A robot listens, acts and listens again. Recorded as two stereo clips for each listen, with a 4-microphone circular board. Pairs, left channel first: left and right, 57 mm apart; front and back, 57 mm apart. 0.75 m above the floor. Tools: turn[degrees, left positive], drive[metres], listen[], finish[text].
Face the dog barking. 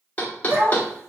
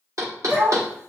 Thought: The dog barking: 135° right.
Action: turn[-135]
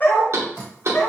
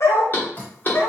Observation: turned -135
Thought: The dog barking is now 45° left.
Action: turn[45]
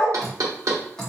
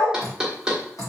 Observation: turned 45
Action: finish[Found it: a dog barking, straight ahead.]